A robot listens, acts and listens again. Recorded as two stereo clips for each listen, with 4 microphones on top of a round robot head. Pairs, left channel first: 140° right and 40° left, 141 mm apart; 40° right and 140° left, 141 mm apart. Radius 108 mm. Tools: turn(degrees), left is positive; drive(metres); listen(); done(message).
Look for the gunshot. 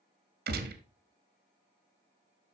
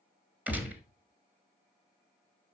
turn(degrees=60)
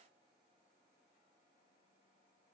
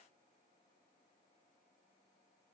done("Facing where the gunshot came from. I can't hear it now.")